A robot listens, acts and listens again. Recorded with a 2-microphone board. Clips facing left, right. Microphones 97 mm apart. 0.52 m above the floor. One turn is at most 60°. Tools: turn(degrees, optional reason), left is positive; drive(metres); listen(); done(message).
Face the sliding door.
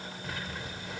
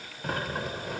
turn(degrees=-50, reason="The sliding door: about 50° right or 130° right.")
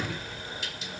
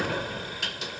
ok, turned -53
turn(degrees=-60, reason="So it is at 70° right.")
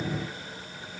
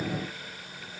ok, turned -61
turn(degrees=-10, reason="Nothing new. It was at 10° right.")
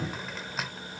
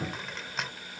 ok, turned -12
done("Facing the sliding door.")